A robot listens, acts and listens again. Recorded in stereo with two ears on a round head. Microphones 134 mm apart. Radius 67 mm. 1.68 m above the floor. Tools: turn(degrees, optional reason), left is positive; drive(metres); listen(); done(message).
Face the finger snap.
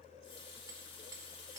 listen()
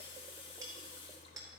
listen()
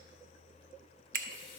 turn(degrees=-60, reason="The finger snap: about 60° right or 120° right.")
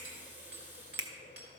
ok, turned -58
turn(degrees=-30, reason="So it is at 30° right.")
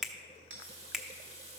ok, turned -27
done("Found it: a finger snap, straight ahead.")